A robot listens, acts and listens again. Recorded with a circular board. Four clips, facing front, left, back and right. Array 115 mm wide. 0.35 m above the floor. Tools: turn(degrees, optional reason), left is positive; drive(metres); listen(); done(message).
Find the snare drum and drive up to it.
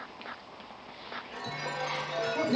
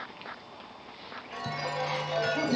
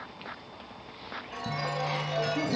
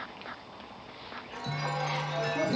listen()
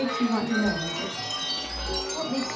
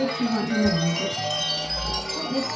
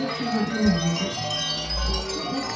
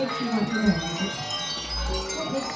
listen()
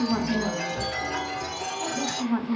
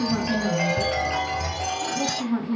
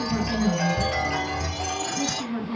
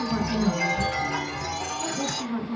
done("I can't make out a snare drum, only a woman speaking and a chime.")